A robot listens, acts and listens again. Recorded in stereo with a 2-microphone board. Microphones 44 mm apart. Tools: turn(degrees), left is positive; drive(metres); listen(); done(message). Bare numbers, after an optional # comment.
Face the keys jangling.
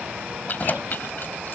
# The keys jangling: about 45° left or 135° left.
turn(45)
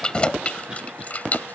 # The keys jangling: about 35° left or 145° left.
turn(35)
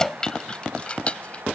# So it is at 25° left.
turn(25)
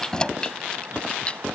# The keys jangling is now 25° left.
turn(25)
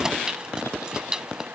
# The keys jangling is now 20° right.
turn(-20)
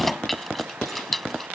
done("Found it: keys jangling, straight ahead.")